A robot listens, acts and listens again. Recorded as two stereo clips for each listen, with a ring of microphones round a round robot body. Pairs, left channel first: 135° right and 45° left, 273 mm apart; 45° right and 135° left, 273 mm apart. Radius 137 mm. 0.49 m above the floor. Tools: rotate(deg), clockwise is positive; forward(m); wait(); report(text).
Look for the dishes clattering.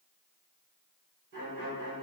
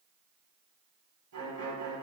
wait()
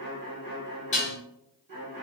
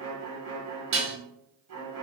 rotate(-165)
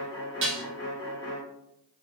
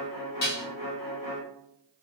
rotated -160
report("Found it: dishes clattering, straight ahead, under 1 m away.")